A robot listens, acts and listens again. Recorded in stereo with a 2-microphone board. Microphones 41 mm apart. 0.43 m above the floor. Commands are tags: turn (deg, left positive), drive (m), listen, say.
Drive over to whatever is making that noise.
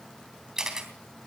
<turn deg="-30"/>
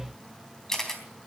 <turn deg="15"/>
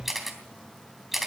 <drive m="1.0"/>
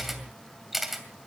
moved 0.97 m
<drive m="1.0"/>
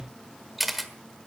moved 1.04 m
<drive m="1.0"/>
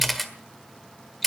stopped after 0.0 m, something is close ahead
<say>Arrived at the camera shutter, straight ahead.</say>